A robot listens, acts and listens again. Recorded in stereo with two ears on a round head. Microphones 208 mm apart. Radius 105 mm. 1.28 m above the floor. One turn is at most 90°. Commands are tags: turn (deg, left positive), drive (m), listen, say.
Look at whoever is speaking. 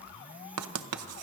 <listen/>
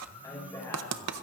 <turn deg="30"/>
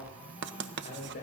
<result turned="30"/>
<turn deg="90"/>
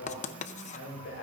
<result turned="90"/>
<turn deg="50"/>
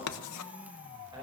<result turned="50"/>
<listen/>
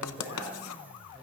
<turn deg="-20"/>
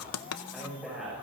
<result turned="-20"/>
<say>Facing the man speaking.</say>